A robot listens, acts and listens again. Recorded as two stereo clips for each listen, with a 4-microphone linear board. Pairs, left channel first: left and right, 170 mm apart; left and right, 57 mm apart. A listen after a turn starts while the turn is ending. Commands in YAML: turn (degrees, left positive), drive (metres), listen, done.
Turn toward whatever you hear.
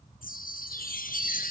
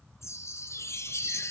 turn: 55
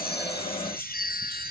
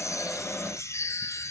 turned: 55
turn: 65
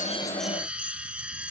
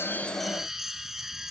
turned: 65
turn: -10
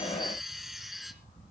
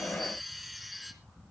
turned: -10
done: "Facing the chime, 2 to 4 m away."